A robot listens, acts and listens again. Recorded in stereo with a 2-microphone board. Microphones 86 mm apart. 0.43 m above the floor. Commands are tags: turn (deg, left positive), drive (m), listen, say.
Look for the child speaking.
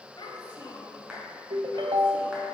<turn deg="65"/>
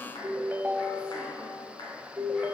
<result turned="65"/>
<listen/>
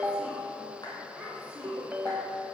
<turn deg="-10"/>
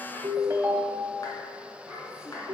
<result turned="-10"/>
<say>Facing the child speaking, 2 to 4 m away.</say>